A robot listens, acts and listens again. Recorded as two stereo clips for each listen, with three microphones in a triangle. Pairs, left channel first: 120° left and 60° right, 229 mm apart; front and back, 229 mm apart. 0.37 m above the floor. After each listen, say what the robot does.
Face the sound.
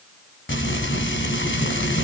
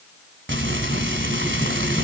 Turn 150° left.
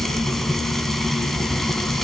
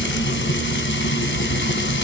Turn 30° left.
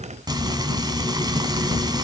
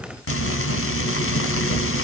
Turn 10° left.
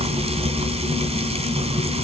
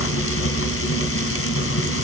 Facing the frying, 2 to 4 m away.